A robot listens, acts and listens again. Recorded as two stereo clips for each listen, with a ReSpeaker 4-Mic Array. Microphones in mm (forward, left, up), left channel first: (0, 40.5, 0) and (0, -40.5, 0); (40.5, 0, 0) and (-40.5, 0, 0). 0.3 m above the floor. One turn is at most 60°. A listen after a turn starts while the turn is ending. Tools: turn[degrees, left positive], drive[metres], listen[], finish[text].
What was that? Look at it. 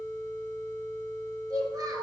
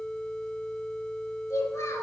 Thought: The child speaking: 50° right.
Action: turn[-50]
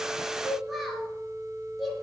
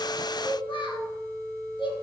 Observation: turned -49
Action: finish[Found it: a child speaking, straight ahead, 2 to 4 m away.]